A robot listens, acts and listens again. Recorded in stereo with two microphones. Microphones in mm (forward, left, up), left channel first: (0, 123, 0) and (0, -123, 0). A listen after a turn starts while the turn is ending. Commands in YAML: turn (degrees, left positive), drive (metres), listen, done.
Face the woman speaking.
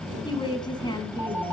turn: 15
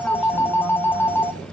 listen: true
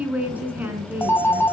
turn: -30
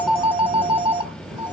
listen: true
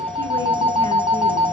listen: true
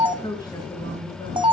turn: 15
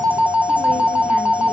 listen: true
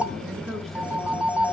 done: "Facing the woman speaking."